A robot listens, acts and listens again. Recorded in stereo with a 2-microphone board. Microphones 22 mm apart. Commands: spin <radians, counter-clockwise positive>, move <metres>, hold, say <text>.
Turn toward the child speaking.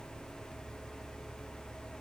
hold
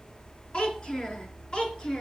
spin 0.70
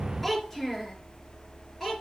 say Found it: a child speaking, straight ahead, over 4 m away.